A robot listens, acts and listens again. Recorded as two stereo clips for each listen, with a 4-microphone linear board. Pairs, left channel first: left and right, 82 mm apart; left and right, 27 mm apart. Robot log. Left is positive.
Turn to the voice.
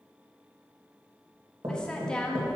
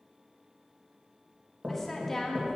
cmd yaw +30
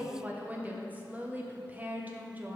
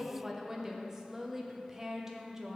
note: So it is at 20° right.
cmd yaw -20
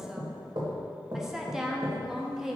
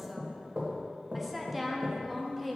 end: Found it: a woman speaking, straight ahead.